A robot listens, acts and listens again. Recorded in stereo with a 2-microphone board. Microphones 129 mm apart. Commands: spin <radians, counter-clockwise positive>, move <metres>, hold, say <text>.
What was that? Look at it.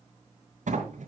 spin -1.22
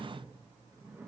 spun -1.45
spin -0.35
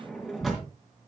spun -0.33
say Found it: a sliding door, straight ahead.